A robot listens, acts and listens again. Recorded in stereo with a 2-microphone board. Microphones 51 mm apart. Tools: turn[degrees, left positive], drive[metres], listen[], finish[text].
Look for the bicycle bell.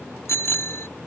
Thought: The bicycle bell: about 60° left or 120° left.
Action: turn[60]
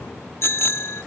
Thought: So it is at 60° left.
Action: turn[60]
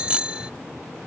Thought: The bicycle bell is now 20° right.
Action: turn[-20]
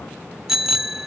Thought: The bicycle bell is now 10° right.
Action: turn[-10]
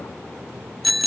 Action: finish[Facing the bicycle bell.]